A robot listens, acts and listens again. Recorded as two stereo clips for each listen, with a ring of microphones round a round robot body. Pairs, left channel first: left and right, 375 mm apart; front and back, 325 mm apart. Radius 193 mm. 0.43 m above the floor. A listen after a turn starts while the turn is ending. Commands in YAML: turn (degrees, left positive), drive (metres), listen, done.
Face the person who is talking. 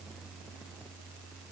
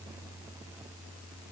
listen: true
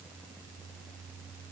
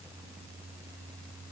listen: true
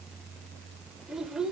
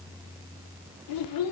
done: "Facing the child speaking."